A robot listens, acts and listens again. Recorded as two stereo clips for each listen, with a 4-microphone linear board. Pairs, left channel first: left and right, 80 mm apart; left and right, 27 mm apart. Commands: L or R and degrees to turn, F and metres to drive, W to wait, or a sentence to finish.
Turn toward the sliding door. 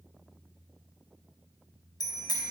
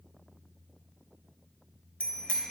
W
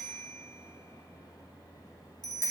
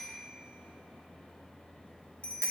W
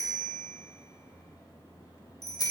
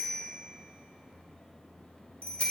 I can't make out a sliding door, only a bicycle bell.